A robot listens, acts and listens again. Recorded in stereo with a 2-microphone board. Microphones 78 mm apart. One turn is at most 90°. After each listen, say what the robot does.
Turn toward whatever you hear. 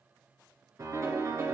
Turn 40° right.
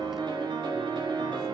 Turn 90° right.
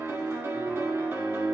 Turn 30° right.
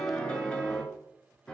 Turn 10° left.
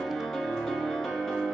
Facing the piano.